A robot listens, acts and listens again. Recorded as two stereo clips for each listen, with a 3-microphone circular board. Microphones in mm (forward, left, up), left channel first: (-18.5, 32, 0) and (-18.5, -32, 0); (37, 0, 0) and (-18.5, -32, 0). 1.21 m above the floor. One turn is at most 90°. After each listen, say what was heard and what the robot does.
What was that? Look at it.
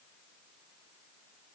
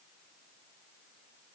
Keep listening.
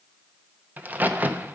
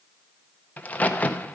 The crack: 35° right. Turn 35° right.
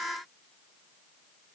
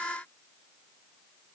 I heard a crack from this way, but can't make it out now.